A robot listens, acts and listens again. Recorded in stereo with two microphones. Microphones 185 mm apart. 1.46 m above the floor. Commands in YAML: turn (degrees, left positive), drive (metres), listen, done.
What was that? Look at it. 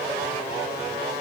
listen: true
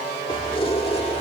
turn: 35
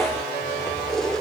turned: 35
done: "Facing the keys jangling."